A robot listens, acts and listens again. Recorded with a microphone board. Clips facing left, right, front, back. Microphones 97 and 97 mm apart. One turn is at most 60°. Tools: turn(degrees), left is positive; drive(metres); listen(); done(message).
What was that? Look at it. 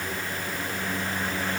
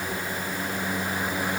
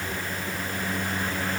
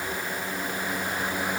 listen()
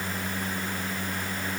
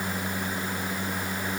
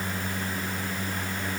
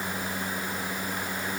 listen()
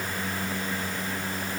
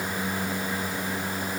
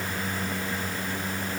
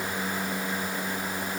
done("I can't make out anything.")